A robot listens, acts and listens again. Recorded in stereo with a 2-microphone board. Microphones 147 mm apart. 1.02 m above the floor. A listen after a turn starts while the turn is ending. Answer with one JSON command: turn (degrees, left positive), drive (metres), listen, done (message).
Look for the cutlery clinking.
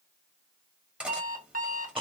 {"turn": -30}
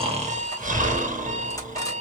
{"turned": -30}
{"listen": true}
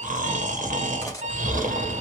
{"listen": true}
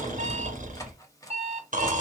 {"turn": 25}
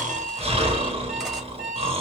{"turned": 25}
{"listen": true}
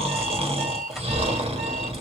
{"listen": true}
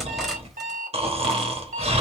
{"done": "I heard cutlery clinking from this way, but can't make it out now."}